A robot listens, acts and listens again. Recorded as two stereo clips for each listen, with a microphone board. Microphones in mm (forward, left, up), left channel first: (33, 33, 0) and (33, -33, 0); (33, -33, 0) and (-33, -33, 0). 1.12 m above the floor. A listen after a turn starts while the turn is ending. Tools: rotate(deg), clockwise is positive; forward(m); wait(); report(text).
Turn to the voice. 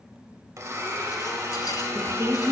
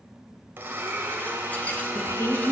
rotate(45)
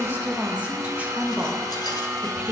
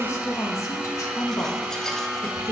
rotate(25)
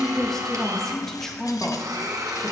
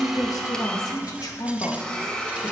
report("Facing the woman speaking, 1 to 2 m away.")